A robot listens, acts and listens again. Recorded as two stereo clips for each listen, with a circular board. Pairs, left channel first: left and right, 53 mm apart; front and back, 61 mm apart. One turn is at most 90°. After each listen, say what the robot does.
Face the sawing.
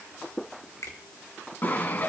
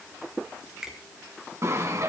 Turn 90° left.
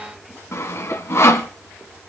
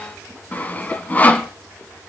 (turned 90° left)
Turn 60° left.
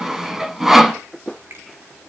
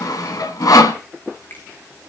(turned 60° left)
Found it: sawing, straight ahead, 1 to 2 m away.